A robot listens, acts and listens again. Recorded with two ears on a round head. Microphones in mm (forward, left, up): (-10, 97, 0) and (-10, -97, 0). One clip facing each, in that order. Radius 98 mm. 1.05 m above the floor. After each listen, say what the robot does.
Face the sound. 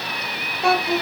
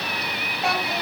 Turn 90° left.
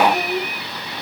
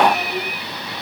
Turn 15° left.
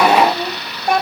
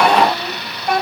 Turn 25° left.
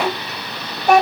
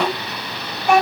Turn 35° left.
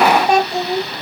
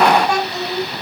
Turn 30° left.
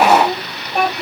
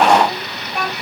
Turn 20° left.
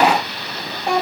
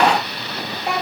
Found it: a child speaking, straight ahead.